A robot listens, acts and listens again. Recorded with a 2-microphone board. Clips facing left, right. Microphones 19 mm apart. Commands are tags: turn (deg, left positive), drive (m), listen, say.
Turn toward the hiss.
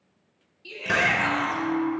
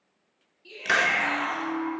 <turn deg="-60"/>
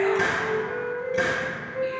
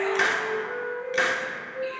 <turn deg="-60"/>
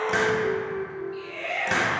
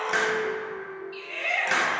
<say>Facing the hiss, under 1 m away.</say>